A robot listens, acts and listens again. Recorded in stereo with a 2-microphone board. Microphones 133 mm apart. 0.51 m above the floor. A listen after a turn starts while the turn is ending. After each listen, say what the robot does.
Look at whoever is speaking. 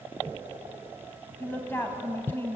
Turn 15° left.
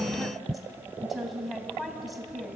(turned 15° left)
Facing the woman speaking, 2 to 4 m away.